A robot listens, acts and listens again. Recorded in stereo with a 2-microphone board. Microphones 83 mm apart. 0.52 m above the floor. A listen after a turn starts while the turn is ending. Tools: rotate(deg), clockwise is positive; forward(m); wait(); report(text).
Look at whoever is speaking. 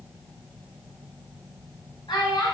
rotate(-65)
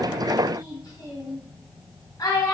rotate(-50)
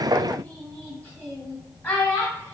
rotate(-20)
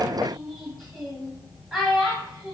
report("Facing the child speaking.")